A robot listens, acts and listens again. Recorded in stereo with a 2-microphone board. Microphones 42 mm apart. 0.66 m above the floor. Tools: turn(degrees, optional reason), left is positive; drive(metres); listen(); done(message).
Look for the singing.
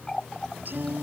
turn(degrees=-50, reason="The singing: about 50° right or 130° right.")
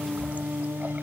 turn(degrees=-75, reason="So it is at 75° right.")
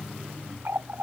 listen()
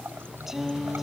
done("Facing the singing.")